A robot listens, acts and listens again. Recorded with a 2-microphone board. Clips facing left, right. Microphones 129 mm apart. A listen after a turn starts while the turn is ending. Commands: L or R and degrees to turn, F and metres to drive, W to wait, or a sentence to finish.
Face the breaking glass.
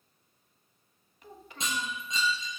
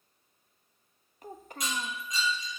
L25
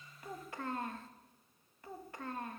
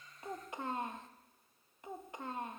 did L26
W
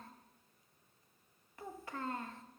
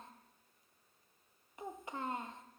I heard breaking glass, but can't make it out now. It was about straight ahead or 130° left.